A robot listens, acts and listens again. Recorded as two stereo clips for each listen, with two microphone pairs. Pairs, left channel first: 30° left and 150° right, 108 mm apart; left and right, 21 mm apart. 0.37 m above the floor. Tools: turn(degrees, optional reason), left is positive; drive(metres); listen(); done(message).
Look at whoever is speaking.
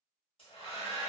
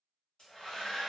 listen()
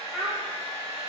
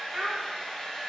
turn(degrees=-35, reason="The child speaking: 35° right.")
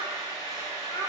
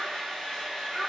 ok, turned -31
done("Facing the child speaking.")